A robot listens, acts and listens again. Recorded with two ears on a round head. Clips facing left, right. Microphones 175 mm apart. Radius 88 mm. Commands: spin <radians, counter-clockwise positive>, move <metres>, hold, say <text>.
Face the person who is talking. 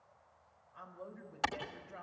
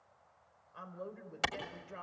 spin -0.96
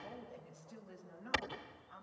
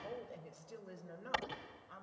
spin -1.13
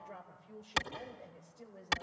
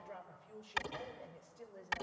say Found it: a man speaking, straight ahead, over 4 m away.